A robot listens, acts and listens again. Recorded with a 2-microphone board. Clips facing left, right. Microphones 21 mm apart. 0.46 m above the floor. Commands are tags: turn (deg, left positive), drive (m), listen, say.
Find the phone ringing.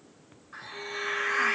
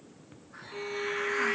<listen/>
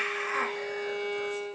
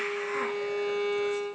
<listen/>
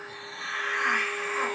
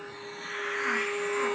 <say>I can't make out a phone ringing, only a violin and a hiss.</say>